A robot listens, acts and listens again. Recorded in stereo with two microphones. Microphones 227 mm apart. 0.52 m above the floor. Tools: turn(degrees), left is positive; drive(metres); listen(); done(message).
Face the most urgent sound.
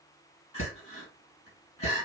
turn(degrees=30)
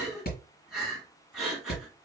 done("Facing the crying.")